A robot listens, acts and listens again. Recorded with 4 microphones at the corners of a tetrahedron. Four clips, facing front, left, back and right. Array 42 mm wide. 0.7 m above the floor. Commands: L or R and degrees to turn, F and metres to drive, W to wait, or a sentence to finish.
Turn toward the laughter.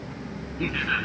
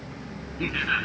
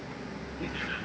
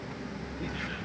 L55
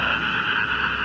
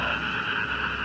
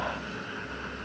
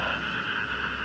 Facing the laughter.